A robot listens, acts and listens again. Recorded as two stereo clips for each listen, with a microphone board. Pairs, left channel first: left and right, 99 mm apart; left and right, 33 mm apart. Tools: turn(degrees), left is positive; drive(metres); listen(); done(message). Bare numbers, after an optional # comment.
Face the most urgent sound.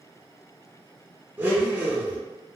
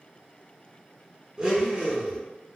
listen()
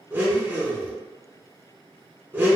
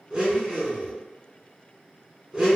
listen()
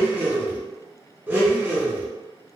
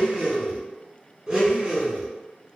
done("I can't make out anything urgent, only a blender.")